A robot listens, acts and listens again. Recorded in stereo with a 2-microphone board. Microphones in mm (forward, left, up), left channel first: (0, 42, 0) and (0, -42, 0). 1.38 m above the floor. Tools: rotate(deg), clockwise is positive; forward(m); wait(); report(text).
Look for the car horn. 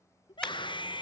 rotate(-30)
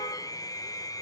wait()
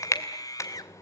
rotate(-140)
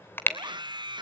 rotate(-30)
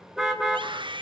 report("Facing the car horn, 2 to 4 m away.")